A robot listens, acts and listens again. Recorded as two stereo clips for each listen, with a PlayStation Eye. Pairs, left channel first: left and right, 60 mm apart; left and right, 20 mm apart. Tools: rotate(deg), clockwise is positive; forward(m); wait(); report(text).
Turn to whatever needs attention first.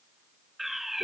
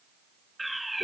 rotate(30)
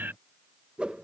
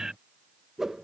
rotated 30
rotate(145)
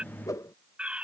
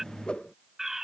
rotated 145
rotate(20)
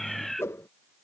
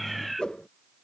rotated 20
report("Found it: a fire alarm, straight ahead.")